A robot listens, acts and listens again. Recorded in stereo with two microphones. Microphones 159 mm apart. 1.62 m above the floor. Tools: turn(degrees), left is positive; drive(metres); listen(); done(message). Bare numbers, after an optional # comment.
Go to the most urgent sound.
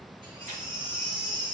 # The baby crying: about 30° right or 150° right.
turn(-30)
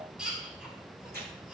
drive(1.0)
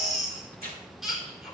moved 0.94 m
drive(1.0)
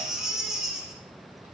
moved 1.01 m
drive(1.0)
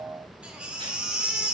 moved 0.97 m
# The baby crying is now 10° right.
turn(-10)
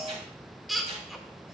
drive(1.0)
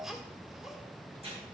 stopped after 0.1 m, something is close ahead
done("Arrived at the baby crying, straight ahead.")